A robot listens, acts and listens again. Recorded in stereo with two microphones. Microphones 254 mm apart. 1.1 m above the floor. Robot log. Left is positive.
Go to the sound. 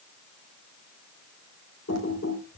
cmd yaw +90
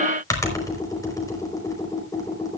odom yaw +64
note: So it is at 15° left.
cmd yaw +15
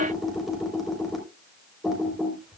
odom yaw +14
cmd fwd 1.0
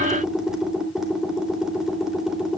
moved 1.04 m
cmd fwd 1.0
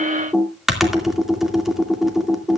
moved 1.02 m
cmd fwd 1.0
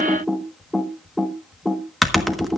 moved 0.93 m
cmd fwd 1.0
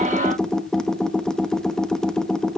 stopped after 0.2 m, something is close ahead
end: I am next to the typing on a keyboard.